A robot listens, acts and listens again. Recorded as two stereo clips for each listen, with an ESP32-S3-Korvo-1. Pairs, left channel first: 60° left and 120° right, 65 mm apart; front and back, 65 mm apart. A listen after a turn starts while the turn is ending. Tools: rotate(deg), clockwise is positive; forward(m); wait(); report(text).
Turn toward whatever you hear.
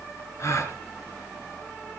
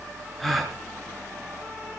rotate(-90)
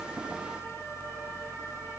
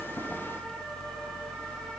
report("Facing where the gasp came from. I can't hear it now.")